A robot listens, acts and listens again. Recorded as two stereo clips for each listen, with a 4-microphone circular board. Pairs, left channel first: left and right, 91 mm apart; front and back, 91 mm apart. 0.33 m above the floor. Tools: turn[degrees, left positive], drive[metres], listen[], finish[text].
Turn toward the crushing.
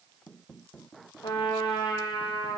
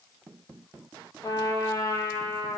Action: listen[]
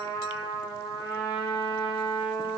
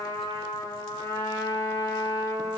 Action: listen[]
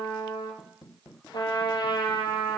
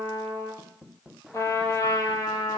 Action: finish[I can't make out crushing to turn to.]